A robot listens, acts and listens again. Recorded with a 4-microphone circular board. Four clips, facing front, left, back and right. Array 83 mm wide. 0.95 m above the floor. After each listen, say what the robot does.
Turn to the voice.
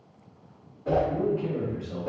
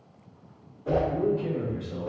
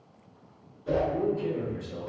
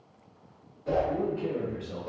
Turn 55° right.
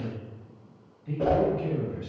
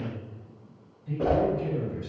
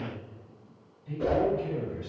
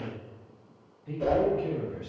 Turn 30° right.
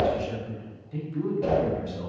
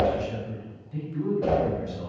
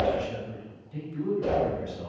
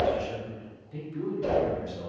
Facing the man speaking.